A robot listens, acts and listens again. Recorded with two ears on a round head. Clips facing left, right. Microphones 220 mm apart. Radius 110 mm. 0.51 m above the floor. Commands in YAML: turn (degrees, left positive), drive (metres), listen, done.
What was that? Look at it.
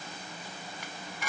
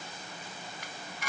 turn: 75
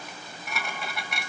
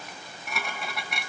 done: "Found it: dishes clattering, straight ahead."